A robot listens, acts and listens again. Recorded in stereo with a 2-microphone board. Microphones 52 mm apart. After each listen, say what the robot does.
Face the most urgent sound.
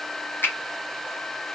Keep listening.
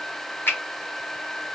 Keep listening.
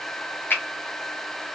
I can't make out anything urgent, only a finger snap.